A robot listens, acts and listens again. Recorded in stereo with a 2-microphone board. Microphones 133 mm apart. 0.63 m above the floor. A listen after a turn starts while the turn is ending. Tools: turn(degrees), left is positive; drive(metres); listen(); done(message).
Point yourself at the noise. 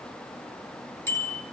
turn(degrees=20)
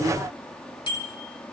turn(degrees=140)
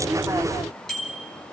done("Found it: a bicycle bell, straight ahead.")